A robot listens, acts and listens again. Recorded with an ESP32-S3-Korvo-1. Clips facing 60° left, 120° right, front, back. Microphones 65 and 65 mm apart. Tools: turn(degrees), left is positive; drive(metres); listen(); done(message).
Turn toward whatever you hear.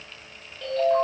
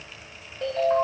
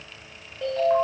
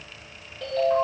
turn(degrees=-65)
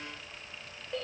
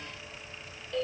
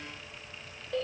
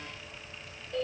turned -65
done("Found it: a ringtone, straight ahead, 2 to 4 m away.")